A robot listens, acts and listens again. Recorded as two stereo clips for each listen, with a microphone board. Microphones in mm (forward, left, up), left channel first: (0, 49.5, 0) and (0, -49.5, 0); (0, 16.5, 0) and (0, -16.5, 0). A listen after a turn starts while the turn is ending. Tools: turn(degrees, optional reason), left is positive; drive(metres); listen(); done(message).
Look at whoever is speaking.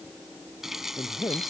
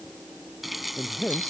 turn(degrees=40, reason="The man speaking: about 40° left or 140° left.")
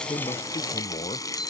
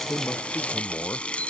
turn(degrees=100, reason="So it is at 100° left.")
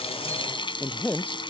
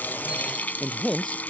turn(degrees=15, reason="The man speaking is now 15° left.")
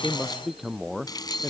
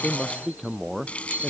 done("Facing the man speaking.")